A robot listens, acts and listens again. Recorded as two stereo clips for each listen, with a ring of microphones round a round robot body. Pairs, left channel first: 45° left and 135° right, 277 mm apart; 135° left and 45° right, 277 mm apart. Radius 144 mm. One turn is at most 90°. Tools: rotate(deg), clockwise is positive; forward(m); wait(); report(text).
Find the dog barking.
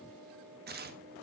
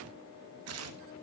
wait()
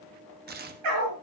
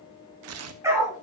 rotate(90)
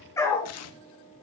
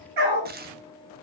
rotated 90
rotate(35)
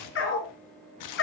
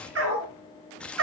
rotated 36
report("Found it: a dog barking, straight ahead.")